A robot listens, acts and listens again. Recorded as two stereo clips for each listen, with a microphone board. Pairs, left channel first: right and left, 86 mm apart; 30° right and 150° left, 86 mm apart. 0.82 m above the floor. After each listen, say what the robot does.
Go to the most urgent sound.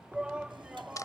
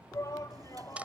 Turn 15° left.
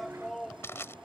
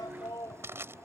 Drive 1.0 m forward.
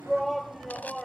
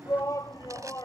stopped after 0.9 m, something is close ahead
Arrived at the shout, straight ahead.